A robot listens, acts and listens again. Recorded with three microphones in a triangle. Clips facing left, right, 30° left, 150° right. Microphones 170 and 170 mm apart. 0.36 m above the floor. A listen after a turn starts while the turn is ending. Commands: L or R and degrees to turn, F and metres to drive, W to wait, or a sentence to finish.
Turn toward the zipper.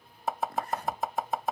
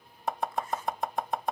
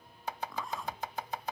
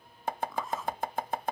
L120
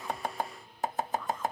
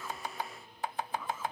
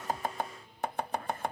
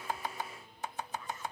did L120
Facing the zipper.